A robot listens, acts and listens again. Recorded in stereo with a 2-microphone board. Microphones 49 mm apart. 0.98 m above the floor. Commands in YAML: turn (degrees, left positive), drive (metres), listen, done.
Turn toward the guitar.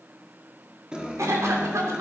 turn: -15
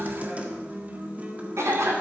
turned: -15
turn: -150
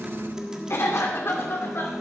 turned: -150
turn: -15
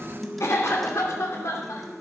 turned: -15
done: "Facing the guitar."